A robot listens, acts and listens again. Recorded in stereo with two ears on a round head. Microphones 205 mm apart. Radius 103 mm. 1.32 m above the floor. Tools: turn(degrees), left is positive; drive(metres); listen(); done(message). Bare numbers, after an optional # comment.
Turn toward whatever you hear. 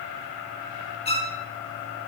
# The violin: about 25° left or 155° left.
turn(25)
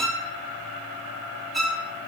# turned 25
done("Facing the violin.")